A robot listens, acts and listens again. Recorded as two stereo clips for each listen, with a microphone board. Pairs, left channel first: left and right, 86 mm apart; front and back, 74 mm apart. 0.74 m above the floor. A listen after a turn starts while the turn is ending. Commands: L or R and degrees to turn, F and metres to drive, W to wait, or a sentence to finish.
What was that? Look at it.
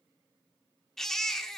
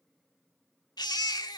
Facing the baby crying, 1 to 2 m away.